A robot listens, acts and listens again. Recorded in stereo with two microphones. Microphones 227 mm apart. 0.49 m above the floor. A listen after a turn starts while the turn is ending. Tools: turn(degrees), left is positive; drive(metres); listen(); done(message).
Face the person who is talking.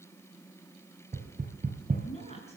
turn(degrees=30)
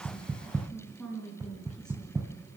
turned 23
done("Found it: a woman speaking, straight ahead, over 4 m away.")